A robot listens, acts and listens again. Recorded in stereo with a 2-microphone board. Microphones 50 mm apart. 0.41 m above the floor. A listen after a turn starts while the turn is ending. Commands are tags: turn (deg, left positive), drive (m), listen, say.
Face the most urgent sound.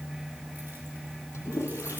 <listen/>
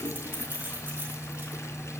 <listen/>
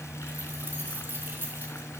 <say>I can't make out anything urgent, only a toilet flushing and keys jangling.</say>